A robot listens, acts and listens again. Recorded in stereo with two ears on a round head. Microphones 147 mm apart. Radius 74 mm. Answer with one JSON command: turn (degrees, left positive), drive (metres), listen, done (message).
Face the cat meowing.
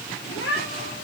{"turn": 90}
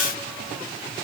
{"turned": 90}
{"listen": true}
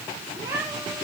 {"turn": -20}
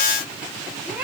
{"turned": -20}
{"turn": -10}
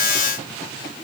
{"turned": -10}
{"listen": true}
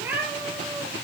{"turn": -10}
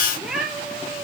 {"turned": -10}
{"done": "Facing the cat meowing, 2 to 4 m away."}